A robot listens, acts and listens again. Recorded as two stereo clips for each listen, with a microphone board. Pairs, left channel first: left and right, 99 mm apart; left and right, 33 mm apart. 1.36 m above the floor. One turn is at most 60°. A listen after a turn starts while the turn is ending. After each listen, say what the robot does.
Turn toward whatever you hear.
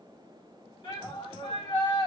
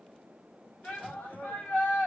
Turn 50° left.
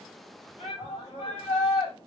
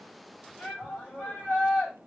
Turn 60° left.
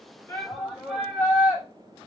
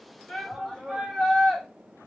Facing the shout, 2 to 4 m away.